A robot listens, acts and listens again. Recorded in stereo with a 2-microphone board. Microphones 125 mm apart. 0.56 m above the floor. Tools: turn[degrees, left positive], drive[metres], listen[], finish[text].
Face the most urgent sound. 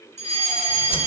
Thought: The fire alarm: about 60° right or 120° right.
Action: turn[-60]
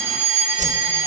Thought: So it is at 15° right.
Action: turn[-15]
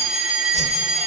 Action: finish[Found it: a fire alarm, straight ahead, 2 to 4 m away.]